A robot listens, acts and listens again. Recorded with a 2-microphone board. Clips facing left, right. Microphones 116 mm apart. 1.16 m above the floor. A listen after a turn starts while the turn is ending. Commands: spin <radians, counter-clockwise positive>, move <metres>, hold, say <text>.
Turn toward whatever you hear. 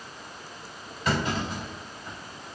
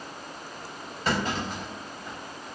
spin -0.61
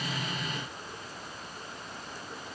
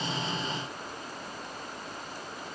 hold
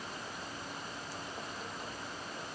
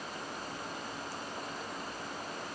say I heard a clunk, but can't make it out now. It was about straight ahead or 110° right.